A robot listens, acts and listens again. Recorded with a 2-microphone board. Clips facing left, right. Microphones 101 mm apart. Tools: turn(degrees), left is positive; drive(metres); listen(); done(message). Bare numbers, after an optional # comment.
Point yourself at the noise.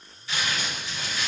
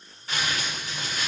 # The crumpling: about 45° right or 135° right.
turn(-45)
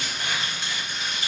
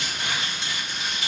# So it is at 90° right.
turn(-90)
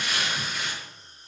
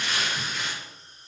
# The crumpling is now 10° left.
turn(10)
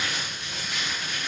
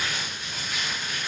done("Facing the crumpling, 1 to 2 m away.")